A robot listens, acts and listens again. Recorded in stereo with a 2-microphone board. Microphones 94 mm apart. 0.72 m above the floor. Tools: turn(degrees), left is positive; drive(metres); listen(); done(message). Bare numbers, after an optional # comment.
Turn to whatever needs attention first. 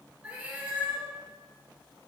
listen()
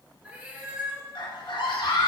# The scream: about 70° left or 110° left.
turn(70)
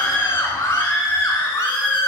# So it is at 30° left.
turn(30)
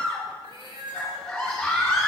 done("Found it: a scream, straight ahead, 2 to 4 m away.")